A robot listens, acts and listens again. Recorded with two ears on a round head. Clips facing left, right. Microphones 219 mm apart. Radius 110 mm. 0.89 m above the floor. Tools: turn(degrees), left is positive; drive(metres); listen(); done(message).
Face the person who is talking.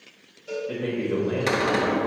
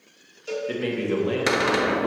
turn(degrees=-45)
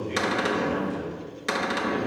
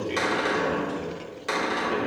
turn(degrees=-55)
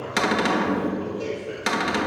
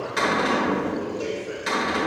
turn(degrees=10)
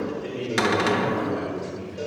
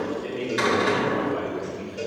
done("Facing the man speaking, 2 to 4 m away.")